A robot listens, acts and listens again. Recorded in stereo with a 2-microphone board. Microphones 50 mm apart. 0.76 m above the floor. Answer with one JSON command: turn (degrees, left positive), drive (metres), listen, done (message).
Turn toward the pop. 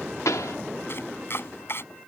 {"turn": 90}
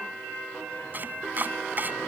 {"done": "I heard a pop from this way, but can't make it out now."}